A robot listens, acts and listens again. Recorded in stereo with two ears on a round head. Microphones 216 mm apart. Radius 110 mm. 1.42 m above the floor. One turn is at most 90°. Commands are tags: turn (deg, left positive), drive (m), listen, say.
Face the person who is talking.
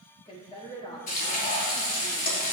<turn deg="20"/>
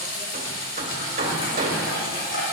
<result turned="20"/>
<listen/>
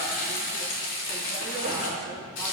<listen/>
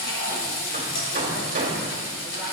<say>I heard a woman speaking, but can't make it out now. It was about straight ahead or 140° left.</say>